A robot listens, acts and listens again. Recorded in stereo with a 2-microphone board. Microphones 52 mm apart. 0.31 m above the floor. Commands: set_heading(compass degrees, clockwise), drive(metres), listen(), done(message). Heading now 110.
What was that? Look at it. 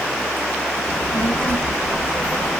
set_heading(70)
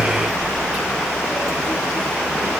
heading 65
done("Facing the child speaking, over 4 m away.")